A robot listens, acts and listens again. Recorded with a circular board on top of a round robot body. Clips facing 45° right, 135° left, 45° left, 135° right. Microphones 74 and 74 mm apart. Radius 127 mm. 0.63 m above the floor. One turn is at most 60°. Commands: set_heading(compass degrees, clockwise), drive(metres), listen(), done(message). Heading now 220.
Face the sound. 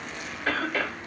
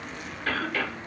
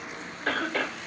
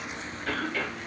set_heading(205)
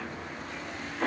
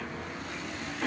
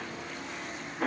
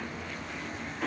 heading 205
done("Found it: a cough, straight ahead, 1 to 2 m away.")